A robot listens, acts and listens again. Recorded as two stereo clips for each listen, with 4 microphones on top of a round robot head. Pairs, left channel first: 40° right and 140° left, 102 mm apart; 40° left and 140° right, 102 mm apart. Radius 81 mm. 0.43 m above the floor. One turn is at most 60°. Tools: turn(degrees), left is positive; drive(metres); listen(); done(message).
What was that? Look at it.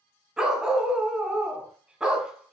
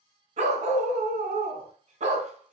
turn(degrees=-60)
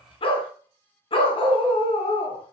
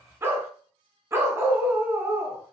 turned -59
turn(degrees=-60)
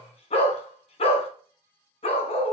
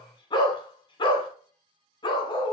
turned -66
turn(degrees=-10)
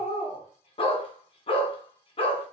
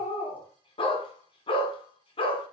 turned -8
done("Found it: a dog barking, straight ahead, 1 to 2 m away.")